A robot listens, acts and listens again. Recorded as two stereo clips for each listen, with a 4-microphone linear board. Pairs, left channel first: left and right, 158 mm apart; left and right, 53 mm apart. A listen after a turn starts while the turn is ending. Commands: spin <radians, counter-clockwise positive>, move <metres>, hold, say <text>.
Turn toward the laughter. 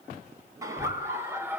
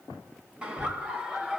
spin -0.52
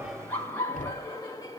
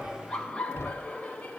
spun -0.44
spin 0.44
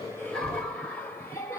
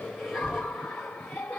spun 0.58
spin 0.26
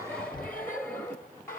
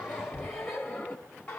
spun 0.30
spin 0.35
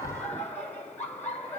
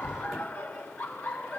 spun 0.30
spin 0.17
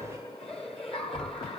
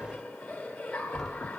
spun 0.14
say Found it: laughter, straight ahead.